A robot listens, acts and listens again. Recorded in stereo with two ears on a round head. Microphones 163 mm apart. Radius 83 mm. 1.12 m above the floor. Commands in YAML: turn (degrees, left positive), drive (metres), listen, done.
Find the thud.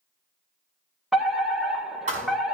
turn: -40
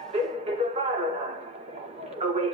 listen: true
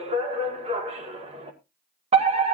done: "I heard a thud, but can't make it out now. It was about straight ahead or 100° right."